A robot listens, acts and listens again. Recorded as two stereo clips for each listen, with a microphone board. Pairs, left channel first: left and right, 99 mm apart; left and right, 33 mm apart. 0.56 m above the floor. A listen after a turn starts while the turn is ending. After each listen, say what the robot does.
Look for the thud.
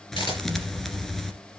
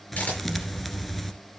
Turn 30° left.
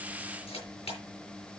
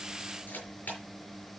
Keep listening.
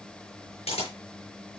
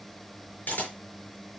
I heard a thud, but can't make it out now. It was about 25° right or 145° left.